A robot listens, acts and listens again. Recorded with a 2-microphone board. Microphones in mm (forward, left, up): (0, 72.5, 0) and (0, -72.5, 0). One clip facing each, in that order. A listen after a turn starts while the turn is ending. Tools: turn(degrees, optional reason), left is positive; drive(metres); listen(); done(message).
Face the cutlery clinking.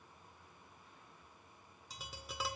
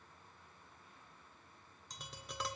listen()
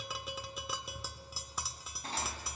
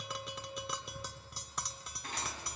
turn(degrees=35, reason="The cutlery clinking: about 35° left or 145° left.")
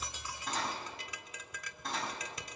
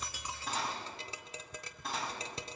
done("Facing the cutlery clinking.")